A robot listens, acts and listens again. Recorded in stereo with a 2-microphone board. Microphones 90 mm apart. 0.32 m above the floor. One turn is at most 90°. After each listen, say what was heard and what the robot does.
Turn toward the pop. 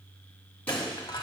Turn 30° left.
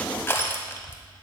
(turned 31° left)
Keep listening.
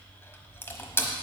I heard a pop, but can't make it out now. It was about 15° right or 135° left.